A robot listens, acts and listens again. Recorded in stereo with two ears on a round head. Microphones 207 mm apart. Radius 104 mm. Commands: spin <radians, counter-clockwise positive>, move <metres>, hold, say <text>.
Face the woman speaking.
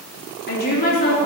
spin 0.70
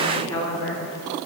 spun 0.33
spin 0.96
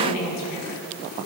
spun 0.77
spin 1.40
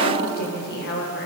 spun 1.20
spin 0.87
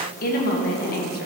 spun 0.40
spin 0.70
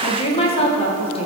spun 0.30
spin 0.44
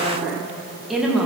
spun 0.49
say Found it: a woman speaking, straight ahead.